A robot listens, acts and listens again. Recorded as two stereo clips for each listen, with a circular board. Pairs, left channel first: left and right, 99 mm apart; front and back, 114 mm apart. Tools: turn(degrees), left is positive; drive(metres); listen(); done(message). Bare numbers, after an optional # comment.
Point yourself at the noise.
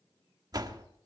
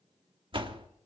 # The door slam: 135° right.
turn(-135)
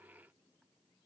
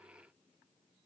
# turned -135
done("Facing where the door slam came from. I can't hear it now.")